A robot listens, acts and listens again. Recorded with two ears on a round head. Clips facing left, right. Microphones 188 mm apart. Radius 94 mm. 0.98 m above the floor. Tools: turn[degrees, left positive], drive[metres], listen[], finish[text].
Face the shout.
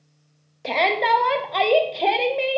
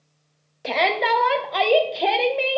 Action: turn[-30]
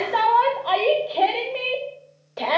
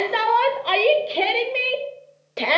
Thought: So it is at 145° right.
Action: turn[-145]
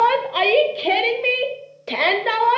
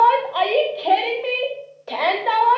Thought: The shout is now 35° left.
Action: turn[35]
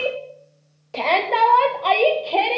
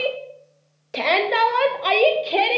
Thought: The shout is now 20° right.
Action: turn[-20]
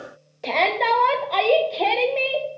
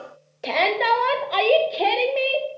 Thought: The shout is now 10° right.
Action: turn[-10]
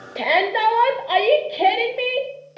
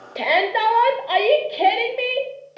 Action: finish[Found it: a shout, straight ahead.]